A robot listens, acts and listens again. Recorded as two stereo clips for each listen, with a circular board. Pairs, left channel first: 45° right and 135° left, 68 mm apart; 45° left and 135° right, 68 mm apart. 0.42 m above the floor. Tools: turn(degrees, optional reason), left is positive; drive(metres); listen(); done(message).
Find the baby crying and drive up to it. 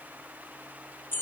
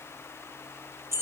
listen()
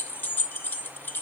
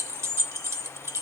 listen()
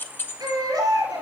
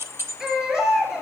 turn(degrees=140, reason="The baby crying: 140° left.")
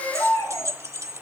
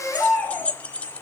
turn(degrees=-10, reason="The baby crying is now 10° right.")
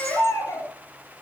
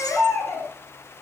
drive(metres=1.0)
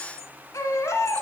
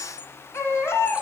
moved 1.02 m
drive(metres=1.0)
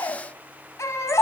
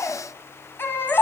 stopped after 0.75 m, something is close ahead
done("Arrived at the baby crying, straight ahead.")